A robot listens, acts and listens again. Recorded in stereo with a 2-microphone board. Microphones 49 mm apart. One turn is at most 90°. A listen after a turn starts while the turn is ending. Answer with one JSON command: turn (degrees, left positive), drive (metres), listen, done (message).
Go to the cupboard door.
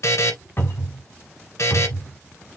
{"turn": 45}
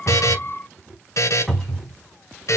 {"drive": 1.0}
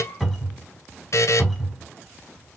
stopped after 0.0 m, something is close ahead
{"done": "Blocked. The cupboard door is further on, straight ahead."}